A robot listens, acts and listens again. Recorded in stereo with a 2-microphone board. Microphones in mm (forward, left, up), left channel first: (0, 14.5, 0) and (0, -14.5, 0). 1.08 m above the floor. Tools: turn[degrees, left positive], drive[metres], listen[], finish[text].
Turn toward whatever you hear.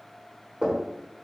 Thought: The knocking: about 20° right or 160° right.
Action: turn[-20]
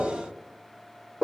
Action: finish[Found it: knocking, straight ahead, 1 to 2 m away.]